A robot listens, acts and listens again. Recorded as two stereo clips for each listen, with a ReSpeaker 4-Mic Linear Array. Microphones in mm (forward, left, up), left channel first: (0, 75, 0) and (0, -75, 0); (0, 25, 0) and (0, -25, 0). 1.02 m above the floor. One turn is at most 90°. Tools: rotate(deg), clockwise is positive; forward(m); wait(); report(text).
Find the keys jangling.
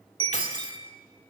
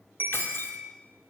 rotate(-50)
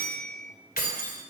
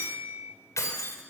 rotate(-85)
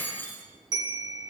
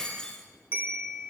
rotate(-15)
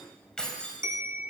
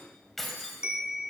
report("Found it: keys jangling, straight ahead, over 4 m away.")